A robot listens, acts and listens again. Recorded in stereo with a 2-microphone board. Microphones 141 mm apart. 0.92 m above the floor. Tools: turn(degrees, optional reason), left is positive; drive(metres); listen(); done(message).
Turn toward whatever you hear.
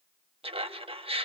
turn(degrees=-40, reason="The laughter: about 40° right or 140° right.")
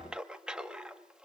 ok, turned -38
done("Found it: laughter, straight ahead, 1 to 2 m away.")